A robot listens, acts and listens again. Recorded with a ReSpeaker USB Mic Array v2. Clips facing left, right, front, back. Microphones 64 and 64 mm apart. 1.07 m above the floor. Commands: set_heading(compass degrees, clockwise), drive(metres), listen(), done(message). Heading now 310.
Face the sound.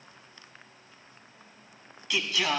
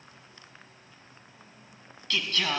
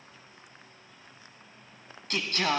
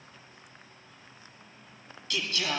done("Found it: singing, straight ahead.")